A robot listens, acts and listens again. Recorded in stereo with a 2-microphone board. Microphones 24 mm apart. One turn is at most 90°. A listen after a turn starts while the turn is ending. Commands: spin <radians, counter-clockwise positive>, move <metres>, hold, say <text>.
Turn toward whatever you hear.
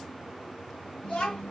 spin 1.05
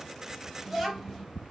say Found it: a child speaking, straight ahead.